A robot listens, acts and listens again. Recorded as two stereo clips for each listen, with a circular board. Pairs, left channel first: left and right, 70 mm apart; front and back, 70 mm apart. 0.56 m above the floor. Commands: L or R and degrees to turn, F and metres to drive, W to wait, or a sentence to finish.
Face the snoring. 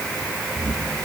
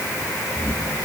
R55
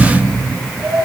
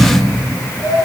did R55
Found it: snoring, straight ahead.